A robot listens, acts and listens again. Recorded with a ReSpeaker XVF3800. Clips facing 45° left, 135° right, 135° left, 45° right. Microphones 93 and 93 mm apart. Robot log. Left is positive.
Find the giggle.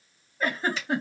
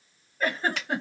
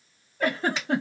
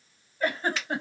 note: The giggle: 130° left.
cmd yaw +130
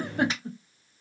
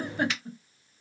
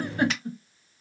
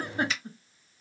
note: The giggle is now 25° left.
cmd yaw +25
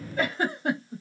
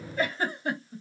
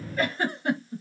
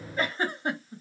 note: The giggle is now 20° left.
cmd yaw +20
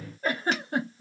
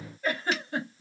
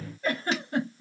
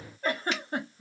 end: Found it: a giggle, straight ahead, 1 to 2 m away.